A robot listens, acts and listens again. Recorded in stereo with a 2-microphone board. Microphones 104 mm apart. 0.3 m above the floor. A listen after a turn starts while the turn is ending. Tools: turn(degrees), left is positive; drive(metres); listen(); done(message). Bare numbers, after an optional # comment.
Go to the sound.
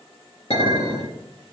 # The clink: about 75° left or 105° left.
turn(75)
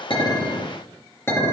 # So it is at 25° left.
turn(25)
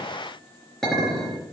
drive(1.0)
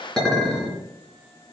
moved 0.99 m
drive(1.0)
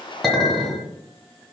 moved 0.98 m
drive(1.0)
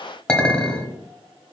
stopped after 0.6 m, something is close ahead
# The clink is now 15° left.
turn(15)
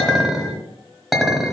done("Arrived at the clink, straight ahead.")